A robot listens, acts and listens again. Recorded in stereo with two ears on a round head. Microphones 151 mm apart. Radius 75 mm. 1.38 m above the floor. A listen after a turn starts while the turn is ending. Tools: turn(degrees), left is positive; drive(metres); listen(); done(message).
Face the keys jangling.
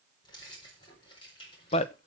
turn(degrees=30)
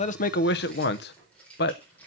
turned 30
turn(degrees=10)
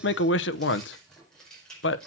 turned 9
done("Facing the keys jangling.")